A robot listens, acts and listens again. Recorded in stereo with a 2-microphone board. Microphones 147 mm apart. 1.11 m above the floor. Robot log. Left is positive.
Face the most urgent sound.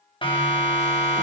note: The siren: about 35° left or 145° left.
cmd yaw +35
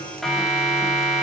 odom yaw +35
end: Found it: a siren, straight ahead.